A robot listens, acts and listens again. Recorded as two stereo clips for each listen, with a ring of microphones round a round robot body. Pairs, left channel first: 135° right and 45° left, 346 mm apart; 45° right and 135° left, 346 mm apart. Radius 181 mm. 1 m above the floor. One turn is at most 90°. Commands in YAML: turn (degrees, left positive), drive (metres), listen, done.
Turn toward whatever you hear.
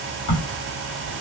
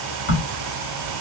turn: -90
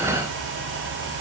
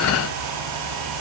turn: -15
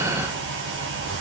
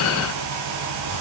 done: "Facing where the crack came from. I can't hear it now."